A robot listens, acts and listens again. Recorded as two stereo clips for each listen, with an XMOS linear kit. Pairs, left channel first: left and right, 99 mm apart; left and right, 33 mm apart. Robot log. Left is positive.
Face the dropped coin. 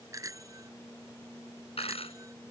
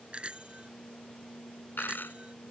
cmd yaw +90
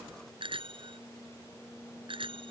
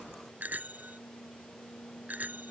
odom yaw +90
end: Facing where the dropped coin came from. I can't hear it now.